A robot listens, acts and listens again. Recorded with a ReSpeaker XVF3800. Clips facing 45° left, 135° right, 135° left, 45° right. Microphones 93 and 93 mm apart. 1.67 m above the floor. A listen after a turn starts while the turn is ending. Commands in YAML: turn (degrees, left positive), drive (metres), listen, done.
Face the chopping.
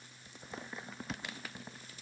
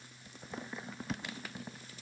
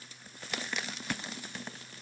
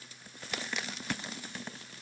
listen: true
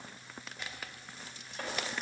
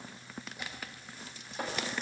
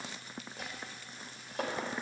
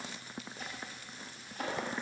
turn: 150
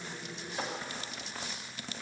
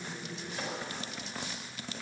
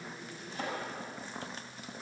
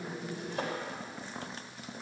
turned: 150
turn: -30
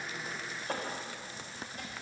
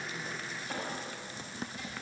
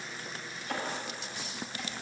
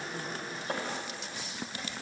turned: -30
done: "Found it: chopping, straight ahead."